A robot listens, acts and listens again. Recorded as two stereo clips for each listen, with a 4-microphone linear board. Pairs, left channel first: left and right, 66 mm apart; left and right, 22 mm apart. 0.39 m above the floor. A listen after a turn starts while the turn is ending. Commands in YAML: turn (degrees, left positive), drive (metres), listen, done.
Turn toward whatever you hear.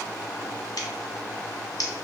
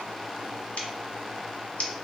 turn: 90
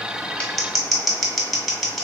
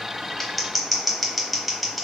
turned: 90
done: "Facing the scissors, under 1 m away."